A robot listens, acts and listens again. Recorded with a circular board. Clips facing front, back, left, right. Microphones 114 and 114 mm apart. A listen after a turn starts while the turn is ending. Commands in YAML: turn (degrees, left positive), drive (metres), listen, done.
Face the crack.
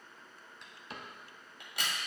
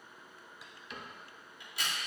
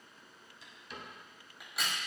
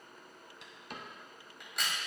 done: "Found it: a crack, straight ahead."